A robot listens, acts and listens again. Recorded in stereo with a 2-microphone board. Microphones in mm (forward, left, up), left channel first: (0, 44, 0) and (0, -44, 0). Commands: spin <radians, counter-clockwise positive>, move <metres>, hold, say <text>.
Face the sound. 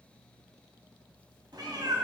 spin -0.87
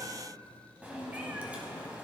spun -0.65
spin -0.26
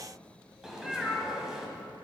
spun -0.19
say Found it: a cat meowing, straight ahead.